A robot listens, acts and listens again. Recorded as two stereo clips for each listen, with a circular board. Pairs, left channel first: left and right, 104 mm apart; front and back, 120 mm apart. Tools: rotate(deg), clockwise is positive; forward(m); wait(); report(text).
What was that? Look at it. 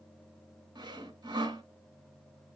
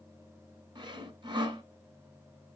rotate(130)
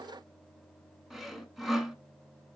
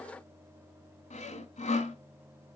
report("Facing the sawing.")